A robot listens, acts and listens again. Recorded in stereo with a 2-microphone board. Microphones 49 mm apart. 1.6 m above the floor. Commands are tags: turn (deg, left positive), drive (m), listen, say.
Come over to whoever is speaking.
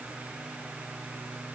<listen/>
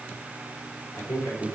<turn deg="90"/>
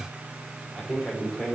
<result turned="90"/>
<drive m="1.0"/>
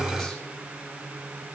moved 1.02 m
<listen/>
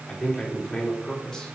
<turn deg="10"/>
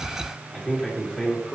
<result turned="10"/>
<drive m="1.0"/>
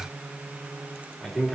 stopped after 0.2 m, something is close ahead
<say>Something is in my way. I am facing the man speaking but have not reached it.</say>